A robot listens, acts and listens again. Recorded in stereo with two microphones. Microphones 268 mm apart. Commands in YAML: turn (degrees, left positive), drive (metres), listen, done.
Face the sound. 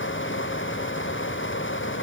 listen: true
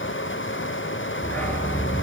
turn: 30
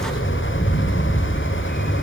turn: 145
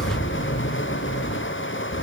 turn: 60
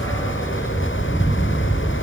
turn: 10
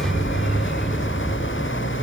done: "Found it: a dog barking, straight ahead."